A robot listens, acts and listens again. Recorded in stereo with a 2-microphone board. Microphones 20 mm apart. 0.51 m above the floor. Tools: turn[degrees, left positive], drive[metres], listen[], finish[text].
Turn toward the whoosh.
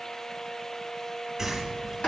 Action: turn[-30]
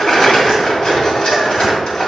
Action: listen[]
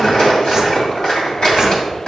Action: listen[]
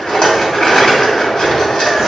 Action: finish[I heard a whoosh, but can't make it out now. It was about 20° left or 140° right.]